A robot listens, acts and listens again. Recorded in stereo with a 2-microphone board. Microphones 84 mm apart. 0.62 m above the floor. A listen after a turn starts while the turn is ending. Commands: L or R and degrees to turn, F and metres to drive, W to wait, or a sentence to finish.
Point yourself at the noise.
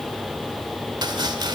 R60
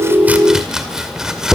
R10
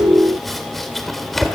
Found it: chopping, straight ahead.